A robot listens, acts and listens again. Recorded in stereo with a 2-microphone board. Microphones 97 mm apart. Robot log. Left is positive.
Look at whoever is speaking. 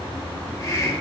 cmd idle
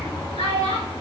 cmd yaw +90
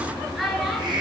end: Found it: a child speaking, straight ahead.